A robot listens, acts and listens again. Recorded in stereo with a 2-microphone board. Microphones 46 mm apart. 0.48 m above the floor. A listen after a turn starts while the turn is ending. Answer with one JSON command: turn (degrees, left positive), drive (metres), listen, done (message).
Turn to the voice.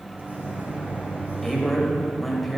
{"turn": 30}
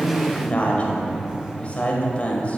{"turn": 145}
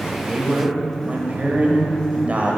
{"turn": -40}
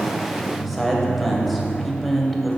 {"done": "Facing the man speaking."}